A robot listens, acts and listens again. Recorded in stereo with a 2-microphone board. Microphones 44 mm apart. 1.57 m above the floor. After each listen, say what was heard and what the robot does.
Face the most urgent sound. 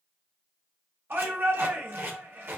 The shout: about 55° right or 125° right. Turn 55° right.
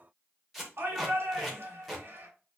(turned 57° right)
So it is at 70° right. Turn 70° right.
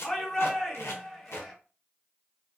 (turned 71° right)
Facing the shout.